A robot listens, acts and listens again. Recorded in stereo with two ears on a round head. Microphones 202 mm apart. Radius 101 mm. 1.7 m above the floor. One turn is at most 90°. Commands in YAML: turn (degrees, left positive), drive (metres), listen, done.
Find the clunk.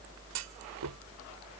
turn: -90
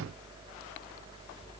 done: "Facing where the clunk came from. I can't hear it now."